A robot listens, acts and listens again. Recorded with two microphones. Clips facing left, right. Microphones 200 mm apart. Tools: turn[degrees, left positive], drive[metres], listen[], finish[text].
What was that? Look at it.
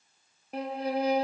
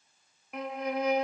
Thought: The violin: about 35° left or 145° left.
Action: turn[35]
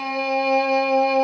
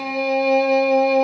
Action: finish[Found it: a violin, straight ahead.]